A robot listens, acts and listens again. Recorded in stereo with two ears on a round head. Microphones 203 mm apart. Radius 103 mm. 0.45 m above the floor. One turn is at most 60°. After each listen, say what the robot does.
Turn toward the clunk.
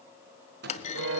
Turn 30° left.
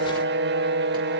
Keep listening.
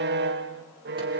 I heard a clunk, but can't make it out now. It was about straight ahead or 120° left.